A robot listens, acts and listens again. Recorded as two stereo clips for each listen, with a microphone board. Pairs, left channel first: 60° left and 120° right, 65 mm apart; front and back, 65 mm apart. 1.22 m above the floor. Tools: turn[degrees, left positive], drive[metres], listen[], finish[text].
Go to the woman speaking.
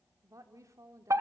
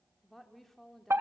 Thought: The woman speaking: 85° right.
Action: turn[-85]
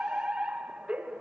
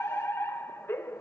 Action: listen[]
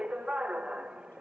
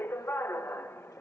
Action: listen[]
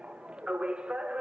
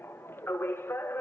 Action: finish[I heard a woman speaking from this way, but can't make it out now. I did not reach it.]